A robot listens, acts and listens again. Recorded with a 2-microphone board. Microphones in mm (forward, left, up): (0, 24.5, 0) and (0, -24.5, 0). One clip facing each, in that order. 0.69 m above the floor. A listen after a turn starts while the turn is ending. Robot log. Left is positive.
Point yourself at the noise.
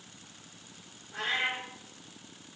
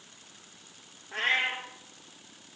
note: The cat meowing: about 60° right or 120° right.
cmd yaw -60
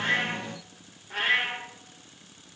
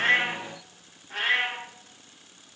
end: Found it: a cat meowing, straight ahead.